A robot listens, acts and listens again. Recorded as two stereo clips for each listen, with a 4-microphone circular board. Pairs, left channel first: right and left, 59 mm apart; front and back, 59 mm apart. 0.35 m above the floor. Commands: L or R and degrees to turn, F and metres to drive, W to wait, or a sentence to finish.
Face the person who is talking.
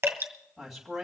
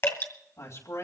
Facing the man speaking.